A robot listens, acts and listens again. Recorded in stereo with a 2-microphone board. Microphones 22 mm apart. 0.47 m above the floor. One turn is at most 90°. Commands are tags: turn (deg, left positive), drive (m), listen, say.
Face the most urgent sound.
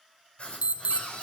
<turn deg="-60"/>
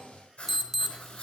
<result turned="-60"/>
<turn deg="-10"/>
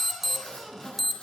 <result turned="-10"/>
<say>Found it: an alarm, straight ahead.</say>